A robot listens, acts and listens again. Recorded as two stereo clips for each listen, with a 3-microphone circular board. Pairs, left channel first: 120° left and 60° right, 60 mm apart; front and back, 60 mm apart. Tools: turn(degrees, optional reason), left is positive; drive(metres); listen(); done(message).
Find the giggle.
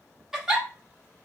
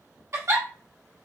turn(degrees=-140, reason="The giggle: 140° right.")
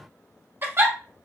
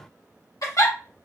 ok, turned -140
turn(degrees=-15, reason="The giggle is now 15° right.")
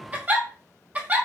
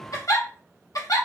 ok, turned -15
done("Facing the giggle.")